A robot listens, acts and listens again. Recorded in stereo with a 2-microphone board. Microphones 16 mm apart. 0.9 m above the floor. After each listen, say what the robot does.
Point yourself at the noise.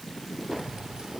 Turn 60° right.
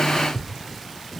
Found it: keys jangling, straight ahead.